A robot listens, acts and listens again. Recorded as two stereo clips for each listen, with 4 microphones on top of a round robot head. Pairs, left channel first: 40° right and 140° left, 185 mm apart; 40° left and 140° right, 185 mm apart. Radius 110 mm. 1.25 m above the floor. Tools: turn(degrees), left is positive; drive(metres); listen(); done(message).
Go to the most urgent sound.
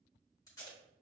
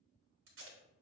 listen()
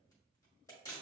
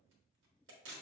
listen()
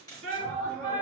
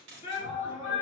turn(degrees=95)
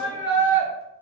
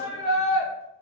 drive(metres=1.0)
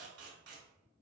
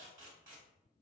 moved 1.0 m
listen()
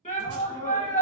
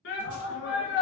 turn(degrees=15)
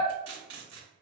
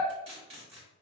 listen()
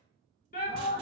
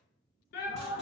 drive(metres=1.0)
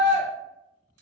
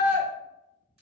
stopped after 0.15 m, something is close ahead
done("I am next to the shout.")